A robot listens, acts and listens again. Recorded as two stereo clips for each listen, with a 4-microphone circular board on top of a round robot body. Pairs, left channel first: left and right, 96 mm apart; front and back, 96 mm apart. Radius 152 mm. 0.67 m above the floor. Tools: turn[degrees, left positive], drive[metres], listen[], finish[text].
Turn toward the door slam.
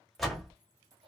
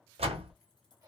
Thought: The door slam: straight behind.
Action: turn[180]
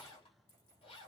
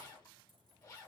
Action: finish[I heard a door slam from this way, but can't make it out now.]